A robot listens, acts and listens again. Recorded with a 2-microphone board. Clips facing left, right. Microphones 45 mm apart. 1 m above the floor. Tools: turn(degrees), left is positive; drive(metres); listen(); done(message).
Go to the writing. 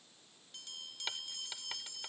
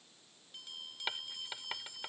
turn(degrees=-20)
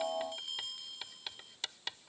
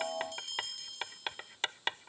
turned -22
turn(degrees=-140)
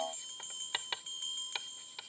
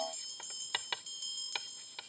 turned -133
drive(metres=1.0)
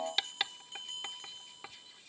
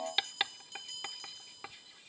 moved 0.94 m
turn(degrees=-10)
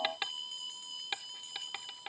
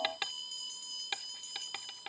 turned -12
drive(metres=1.0)
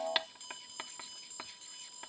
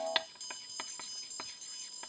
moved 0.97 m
drive(metres=1.0)
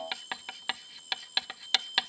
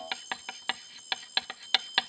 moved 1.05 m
turn(degrees=-10)
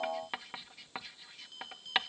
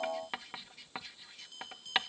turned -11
drive(metres=1.0)
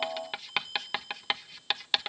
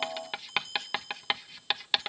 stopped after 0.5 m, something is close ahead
done("I am next to the writing.")